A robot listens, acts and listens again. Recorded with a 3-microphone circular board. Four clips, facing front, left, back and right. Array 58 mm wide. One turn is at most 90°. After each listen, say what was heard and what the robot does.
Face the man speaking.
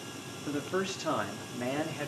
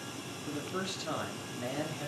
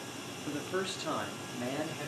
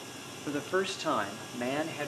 The man speaking: 70° right. Turn 70° right.
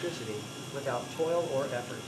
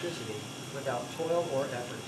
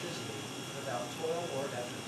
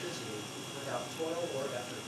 The man speaking is now 25° left. Turn 25° left.
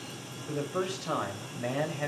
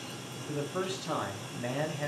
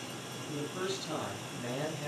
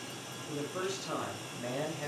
The man speaking is now 10° left. Turn 10° left.
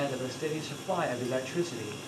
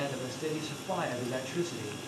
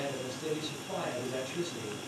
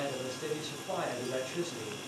Found it: a man speaking, straight ahead, over 4 m away.